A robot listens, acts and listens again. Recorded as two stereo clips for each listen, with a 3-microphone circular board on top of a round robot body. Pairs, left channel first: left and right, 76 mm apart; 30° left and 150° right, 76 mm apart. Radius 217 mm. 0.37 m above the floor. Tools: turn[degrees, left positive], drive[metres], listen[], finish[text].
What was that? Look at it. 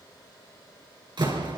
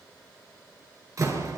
Thought: The door slam: 105° right.
Action: turn[-105]
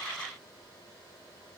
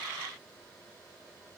Action: finish[Facing where the door slam came from. I can't hear it now.]